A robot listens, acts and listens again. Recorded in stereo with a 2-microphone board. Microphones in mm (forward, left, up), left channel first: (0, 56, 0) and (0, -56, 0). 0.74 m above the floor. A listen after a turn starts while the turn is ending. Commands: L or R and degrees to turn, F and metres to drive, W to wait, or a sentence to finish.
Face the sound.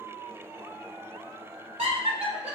R70
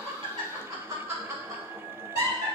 R35
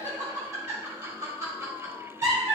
R35
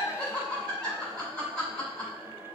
L10
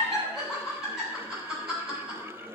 Facing the laughter.